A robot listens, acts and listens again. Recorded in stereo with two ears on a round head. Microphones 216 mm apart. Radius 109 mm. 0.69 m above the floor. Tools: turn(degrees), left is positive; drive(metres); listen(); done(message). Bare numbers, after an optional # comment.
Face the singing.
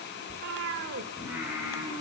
turn(-30)
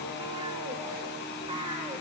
# So it is at 10° left.
turn(10)
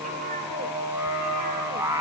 # The singing is now 10° right.
turn(-10)
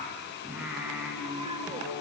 done("Found it: singing, straight ahead.")